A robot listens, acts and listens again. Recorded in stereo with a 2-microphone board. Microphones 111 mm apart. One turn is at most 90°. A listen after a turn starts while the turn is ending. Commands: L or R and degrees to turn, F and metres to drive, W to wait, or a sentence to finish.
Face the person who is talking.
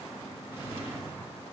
W
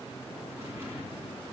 W
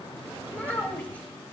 L30
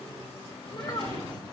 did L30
L90
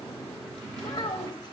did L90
L45
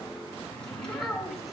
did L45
Facing the child speaking.